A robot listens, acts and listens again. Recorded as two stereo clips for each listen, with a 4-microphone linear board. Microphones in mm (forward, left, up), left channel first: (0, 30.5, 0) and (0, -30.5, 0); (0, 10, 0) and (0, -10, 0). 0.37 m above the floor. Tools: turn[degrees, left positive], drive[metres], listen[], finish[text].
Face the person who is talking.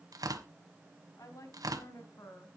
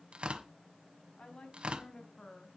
Thought: The woman speaking: about 65° left or 115° left.
Action: turn[65]
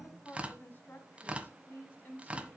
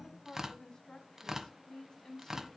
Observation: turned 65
Thought: So it is at 35° left.
Action: turn[35]
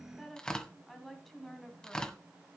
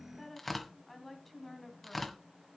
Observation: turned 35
Action: finish[Facing the woman speaking, 2 to 4 m away.]